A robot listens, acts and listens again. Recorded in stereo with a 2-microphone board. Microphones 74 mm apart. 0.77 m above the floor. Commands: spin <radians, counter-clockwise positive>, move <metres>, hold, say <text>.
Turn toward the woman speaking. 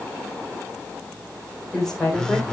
spin 0.52
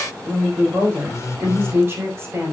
spin -0.61
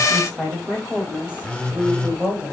spin -0.26
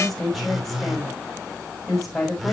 say Found it: a woman speaking, straight ahead, over 4 m away.